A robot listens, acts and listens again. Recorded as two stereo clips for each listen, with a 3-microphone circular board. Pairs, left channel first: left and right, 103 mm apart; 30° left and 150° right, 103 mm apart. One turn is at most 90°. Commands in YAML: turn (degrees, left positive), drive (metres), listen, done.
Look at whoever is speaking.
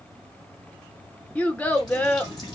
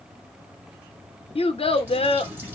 turn: 15
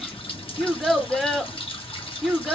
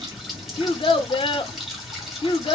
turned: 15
done: "Found it: a child speaking, straight ahead."